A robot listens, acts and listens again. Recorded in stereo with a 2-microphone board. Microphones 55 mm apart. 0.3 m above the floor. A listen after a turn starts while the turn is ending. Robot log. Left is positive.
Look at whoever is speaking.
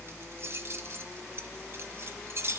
cmd idle
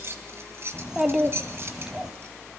cmd yaw -30
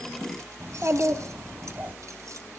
note: So it is at 135° right.
cmd yaw -135
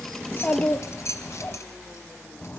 note: The child speaking is now 30° left.
cmd yaw +30
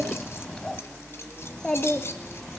note: The child speaking is now 15° left.
cmd yaw +15
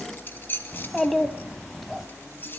end: Facing the child speaking, 1 to 2 m away.